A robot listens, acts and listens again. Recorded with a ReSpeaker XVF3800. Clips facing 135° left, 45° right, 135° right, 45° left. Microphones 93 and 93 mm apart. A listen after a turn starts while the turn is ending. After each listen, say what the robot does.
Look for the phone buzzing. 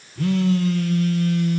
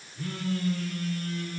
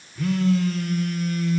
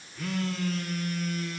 Turn 135° left.
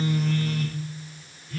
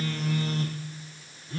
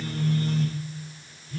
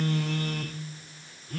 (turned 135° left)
Turn 15° left.
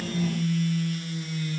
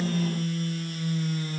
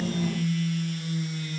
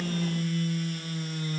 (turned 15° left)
Facing the phone buzzing.